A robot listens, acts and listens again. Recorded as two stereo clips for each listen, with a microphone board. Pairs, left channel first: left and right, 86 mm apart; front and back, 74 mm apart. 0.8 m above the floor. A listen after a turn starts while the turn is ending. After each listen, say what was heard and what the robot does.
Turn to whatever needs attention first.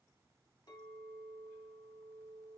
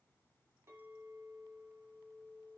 Keep listening.
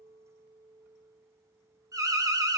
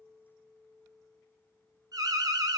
The alarm: 140° right. Turn 140° right.
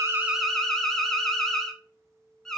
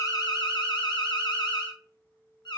Facing the alarm.